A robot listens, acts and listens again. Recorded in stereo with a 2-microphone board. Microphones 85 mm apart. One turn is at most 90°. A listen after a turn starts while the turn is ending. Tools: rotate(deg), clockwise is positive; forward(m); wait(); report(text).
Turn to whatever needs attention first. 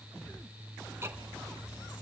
wait()
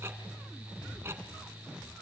wait()
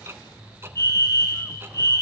rotate(-35)
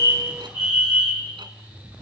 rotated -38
rotate(-90)
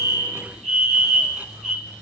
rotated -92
rotate(-10)
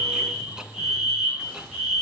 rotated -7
report("Found it: a fire alarm, straight ahead, over 4 m away.")